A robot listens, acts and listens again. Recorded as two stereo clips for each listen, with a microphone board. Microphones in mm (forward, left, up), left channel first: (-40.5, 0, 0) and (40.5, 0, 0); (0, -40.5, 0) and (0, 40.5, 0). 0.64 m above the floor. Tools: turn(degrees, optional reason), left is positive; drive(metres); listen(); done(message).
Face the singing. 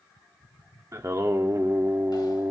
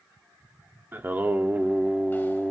done("Facing the singing.")